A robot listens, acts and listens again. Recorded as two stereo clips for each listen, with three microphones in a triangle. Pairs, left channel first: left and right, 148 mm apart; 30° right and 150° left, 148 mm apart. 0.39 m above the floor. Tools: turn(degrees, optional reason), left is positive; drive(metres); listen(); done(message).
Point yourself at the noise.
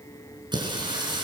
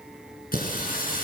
turn(degrees=-30, reason="The singing: 30° right.")
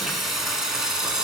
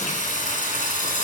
done("Facing the singing, 2 to 4 m away.")